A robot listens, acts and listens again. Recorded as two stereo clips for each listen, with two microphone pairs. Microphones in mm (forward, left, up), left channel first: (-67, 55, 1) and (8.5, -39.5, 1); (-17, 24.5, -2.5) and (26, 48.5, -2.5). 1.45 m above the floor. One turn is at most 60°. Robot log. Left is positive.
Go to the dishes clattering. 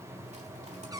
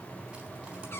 cmd idle
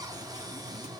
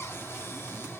cmd idle
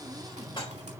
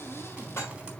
note: The dishes clattering: 175° left.
cmd yaw +60
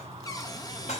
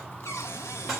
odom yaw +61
note: The dishes clattering is now 115° left.
cmd yaw +60
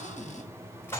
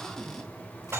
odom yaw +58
note: The dishes clattering is now 60° left.
cmd yaw +60
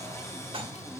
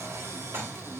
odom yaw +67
note: The dishes clattering is now 10° right.
cmd yaw -10
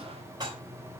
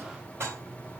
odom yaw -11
cmd fwd 1.0
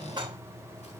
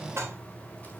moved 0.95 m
cmd fwd 1.0
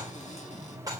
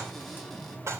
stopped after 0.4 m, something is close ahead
end: Something is in my way. I am facing the dishes clattering but have not reached it.